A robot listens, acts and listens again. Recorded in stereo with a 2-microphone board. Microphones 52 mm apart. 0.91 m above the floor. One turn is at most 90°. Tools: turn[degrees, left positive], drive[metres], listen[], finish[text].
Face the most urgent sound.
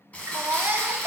Thought: The baby crying: about 45° right or 135° right.
Action: turn[-45]
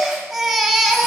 Action: finish[Found it: a baby crying, straight ahead, under 1 m away.]